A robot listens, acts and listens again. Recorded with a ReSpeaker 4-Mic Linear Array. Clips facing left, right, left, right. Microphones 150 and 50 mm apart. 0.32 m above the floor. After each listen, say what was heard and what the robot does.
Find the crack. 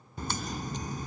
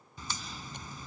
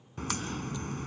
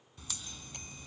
The crack: about 55° left or 125° left. Turn 55° left.
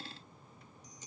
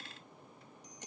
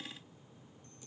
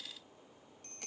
Keep listening.
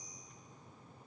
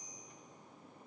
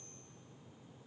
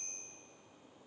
I heard a crack, but can't make it out now. It was about straight ahead or 70° left.